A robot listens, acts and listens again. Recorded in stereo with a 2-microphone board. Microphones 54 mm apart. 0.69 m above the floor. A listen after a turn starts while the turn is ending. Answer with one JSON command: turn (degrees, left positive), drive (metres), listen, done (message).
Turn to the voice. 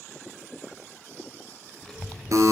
{"turn": 30}
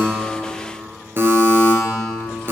{"turn": 140}
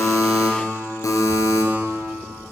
{"turn": 10}
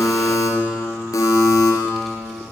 {"done": "Facing the child speaking, 1 to 2 m away."}